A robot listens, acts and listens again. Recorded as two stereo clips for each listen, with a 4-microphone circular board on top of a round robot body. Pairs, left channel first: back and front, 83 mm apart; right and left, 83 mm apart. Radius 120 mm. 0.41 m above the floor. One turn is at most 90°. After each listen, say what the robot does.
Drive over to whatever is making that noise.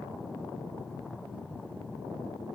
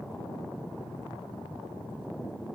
Keep listening.
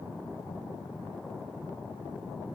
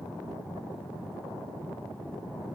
Keep listening.
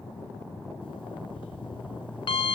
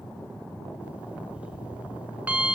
Turn 90° left.
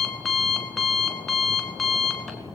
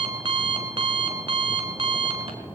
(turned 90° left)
Turn 90° left.
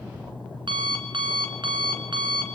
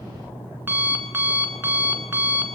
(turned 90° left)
Turn 25° left.
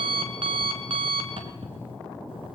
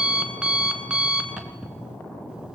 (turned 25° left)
Turn 10° left.
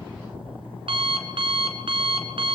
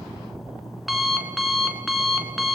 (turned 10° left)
Drive 1.0 m forward.
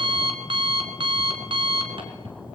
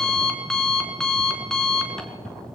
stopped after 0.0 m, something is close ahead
Blocked. The alarm clock is further on, straight ahead.